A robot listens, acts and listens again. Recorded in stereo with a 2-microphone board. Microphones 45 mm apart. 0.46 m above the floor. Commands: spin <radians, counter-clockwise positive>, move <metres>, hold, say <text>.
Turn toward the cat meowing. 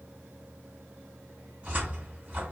hold
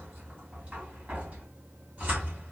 hold
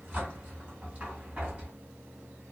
say I can't make out a cat meowing to turn to.